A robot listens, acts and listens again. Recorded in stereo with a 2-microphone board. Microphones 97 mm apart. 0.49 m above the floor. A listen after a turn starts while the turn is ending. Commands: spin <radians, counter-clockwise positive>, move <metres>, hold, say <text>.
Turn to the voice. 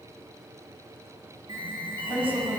spin -1.13
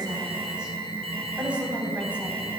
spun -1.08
spin -0.26
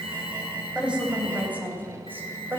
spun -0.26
spin -0.35
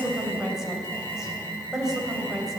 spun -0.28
say Found it: a woman speaking, straight ahead.